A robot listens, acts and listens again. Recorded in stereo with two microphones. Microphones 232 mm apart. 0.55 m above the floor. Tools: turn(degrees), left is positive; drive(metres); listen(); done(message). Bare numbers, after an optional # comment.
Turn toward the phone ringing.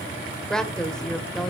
listen()
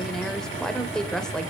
listen()
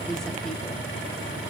done("I can't make out a phone ringing to turn to.")